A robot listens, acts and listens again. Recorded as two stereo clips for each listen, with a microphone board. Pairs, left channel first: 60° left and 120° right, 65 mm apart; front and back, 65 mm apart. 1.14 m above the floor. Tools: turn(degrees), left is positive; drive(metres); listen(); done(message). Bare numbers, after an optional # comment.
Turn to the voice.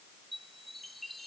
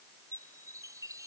listen()
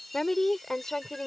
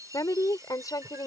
# The woman speaking: 20° right.
turn(-20)
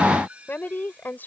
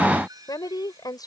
done("Found it: a woman speaking, straight ahead.")